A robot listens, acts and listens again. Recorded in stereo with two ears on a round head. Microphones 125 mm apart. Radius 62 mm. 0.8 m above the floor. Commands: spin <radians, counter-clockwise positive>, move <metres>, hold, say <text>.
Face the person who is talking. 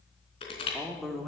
spin 0.52
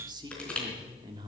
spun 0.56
spin -0.52
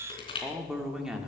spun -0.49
say Found it: a man speaking, straight ahead, 2 to 4 m away.